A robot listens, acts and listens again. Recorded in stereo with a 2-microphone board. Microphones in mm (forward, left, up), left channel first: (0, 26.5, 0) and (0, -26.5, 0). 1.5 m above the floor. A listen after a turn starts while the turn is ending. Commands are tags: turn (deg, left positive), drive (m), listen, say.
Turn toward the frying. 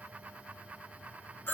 <listen/>
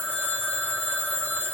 <listen/>
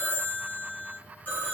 <say>I can't make out frying to turn to.</say>